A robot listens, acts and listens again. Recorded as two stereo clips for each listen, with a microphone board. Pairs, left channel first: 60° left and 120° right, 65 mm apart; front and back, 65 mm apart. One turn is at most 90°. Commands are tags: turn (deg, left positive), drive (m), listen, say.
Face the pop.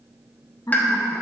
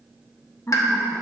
<say>Found it: a pop, straight ahead, under 1 m away.</say>